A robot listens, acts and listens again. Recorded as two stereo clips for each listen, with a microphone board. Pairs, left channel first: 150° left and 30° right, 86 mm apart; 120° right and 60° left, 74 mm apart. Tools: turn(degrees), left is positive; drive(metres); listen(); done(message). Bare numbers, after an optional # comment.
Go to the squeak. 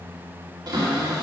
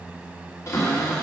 listen()
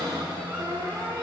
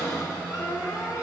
listen()
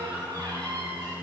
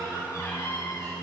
done("I can't make out a squeak, only a cupboard door.")